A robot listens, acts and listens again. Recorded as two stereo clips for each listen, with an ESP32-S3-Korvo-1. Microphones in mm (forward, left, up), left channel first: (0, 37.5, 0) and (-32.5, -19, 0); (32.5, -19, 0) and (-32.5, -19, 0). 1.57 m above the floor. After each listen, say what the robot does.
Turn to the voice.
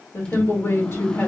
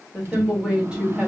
Turn 100° left.
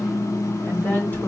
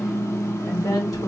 Found it: a woman speaking, straight ahead, 2 to 4 m away.